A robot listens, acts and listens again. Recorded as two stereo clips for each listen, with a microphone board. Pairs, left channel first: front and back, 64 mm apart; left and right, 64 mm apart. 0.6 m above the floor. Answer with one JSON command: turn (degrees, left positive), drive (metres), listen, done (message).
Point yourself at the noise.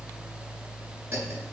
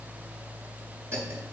{"turn": -135}
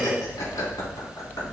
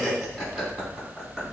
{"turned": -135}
{"done": "Found it: laughter, straight ahead."}